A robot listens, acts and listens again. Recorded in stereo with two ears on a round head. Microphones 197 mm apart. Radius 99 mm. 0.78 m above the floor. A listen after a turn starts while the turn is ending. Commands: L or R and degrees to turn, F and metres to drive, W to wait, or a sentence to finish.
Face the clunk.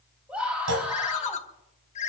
R75
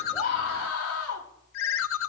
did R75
W
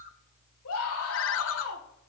I heard a clunk, but can't make it out now. It was about straight ahead or 30° right.